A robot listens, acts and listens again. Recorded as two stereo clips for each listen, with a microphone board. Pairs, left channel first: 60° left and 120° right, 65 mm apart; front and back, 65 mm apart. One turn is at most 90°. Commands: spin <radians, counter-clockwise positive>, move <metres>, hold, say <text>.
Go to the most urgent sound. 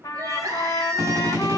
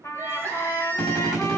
spin -1.57
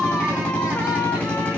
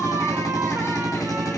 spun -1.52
spin -0.70
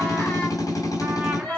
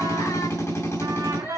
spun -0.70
hold
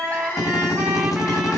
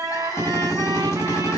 say Facing where the crying came from. I can't hear it now. I did not reach it.